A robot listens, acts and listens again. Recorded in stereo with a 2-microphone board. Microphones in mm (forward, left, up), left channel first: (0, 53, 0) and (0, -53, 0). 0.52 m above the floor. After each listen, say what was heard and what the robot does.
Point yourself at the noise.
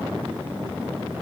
Keep listening.
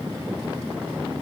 Keep listening.
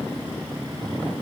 I can't make out anything.